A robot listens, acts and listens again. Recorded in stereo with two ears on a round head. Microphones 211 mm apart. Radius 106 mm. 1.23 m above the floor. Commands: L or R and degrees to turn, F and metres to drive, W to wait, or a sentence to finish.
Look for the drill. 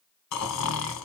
W
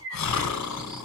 W
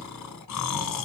I can't make out a drill to turn to.